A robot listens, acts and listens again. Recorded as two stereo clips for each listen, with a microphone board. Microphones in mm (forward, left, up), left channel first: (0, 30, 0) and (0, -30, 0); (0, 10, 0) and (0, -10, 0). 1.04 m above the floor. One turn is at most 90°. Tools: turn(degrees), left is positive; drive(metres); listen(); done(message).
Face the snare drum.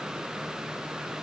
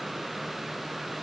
listen()
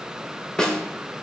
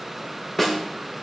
turn(degrees=30)
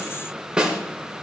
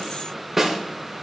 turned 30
turn(degrees=-15)
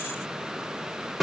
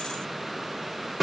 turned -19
done("Found it: a snare drum, straight ahead, 1 to 2 m away.")